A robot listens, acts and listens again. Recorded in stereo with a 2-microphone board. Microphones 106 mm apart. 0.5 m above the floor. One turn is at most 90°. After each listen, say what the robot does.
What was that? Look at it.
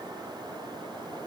Keep listening.
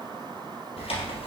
Turn 65° left.
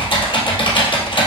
Turn 50° left.
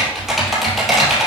Found it: typing on a keyboard, straight ahead, 2 to 4 m away.